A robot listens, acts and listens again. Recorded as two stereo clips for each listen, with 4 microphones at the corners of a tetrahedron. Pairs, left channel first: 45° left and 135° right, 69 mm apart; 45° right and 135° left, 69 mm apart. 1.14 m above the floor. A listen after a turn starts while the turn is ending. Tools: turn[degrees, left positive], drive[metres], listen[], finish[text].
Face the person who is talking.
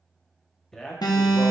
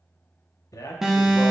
Thought: The man speaking: 40° right.
Action: turn[-40]
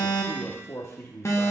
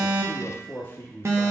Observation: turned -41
Action: finish[Facing the man speaking, under 1 m away.]